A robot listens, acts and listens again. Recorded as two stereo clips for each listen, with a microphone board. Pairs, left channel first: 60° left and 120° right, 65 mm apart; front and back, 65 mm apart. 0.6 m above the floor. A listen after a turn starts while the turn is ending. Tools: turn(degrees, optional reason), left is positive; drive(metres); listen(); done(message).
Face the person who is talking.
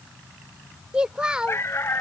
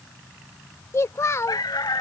turn(degrees=-45, reason="The child speaking: 45° right.")
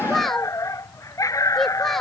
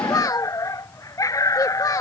turn(degrees=-25, reason="The child speaking is now 25° right.")
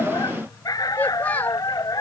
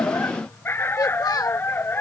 done("Found it: a child speaking, straight ahead.")